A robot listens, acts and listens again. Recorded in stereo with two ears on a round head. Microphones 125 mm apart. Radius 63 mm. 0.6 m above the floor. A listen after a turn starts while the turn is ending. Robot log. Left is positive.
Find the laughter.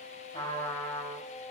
cmd idle
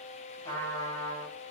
cmd idle
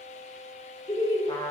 note: The laughter: about 30° left or 150° left.
cmd yaw +30
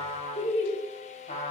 note: So it is at 125° left.
cmd yaw +125
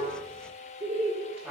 note: The laughter is now 45° right.
cmd yaw -45
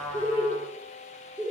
note: The laughter is now 10° right.
cmd yaw -10
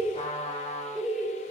end: Found it: laughter, straight ahead, 1 to 2 m away.